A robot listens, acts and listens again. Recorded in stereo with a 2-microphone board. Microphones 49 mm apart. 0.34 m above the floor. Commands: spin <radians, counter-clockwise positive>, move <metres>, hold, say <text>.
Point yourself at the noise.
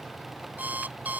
spin -0.61
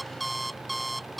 say Facing the alarm clock.